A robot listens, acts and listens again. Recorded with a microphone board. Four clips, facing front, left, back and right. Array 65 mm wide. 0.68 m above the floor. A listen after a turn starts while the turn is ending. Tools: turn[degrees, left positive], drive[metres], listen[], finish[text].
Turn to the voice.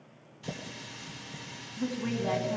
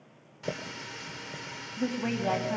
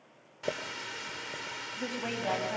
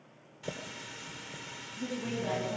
Thought: The woman speaking: 120° left.
Action: turn[120]
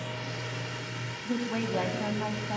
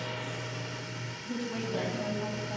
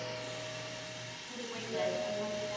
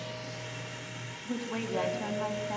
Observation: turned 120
Thought: The woman speaking is now 20° right.
Action: turn[-20]
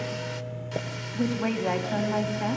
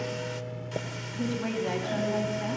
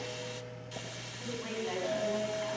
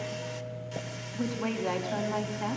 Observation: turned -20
Thought: The woman speaking is now 10° right.
Action: turn[-10]
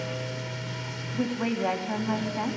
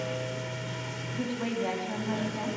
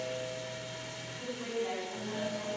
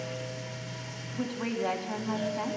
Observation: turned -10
Action: finish[Found it: a woman speaking, straight ahead.]